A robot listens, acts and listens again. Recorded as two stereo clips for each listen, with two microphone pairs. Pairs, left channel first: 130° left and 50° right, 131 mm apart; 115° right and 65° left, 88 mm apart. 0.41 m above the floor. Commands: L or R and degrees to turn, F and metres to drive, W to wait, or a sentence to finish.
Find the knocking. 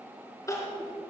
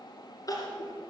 W
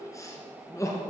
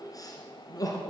W
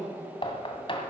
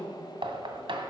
L85
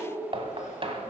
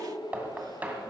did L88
Found it: knocking, straight ahead.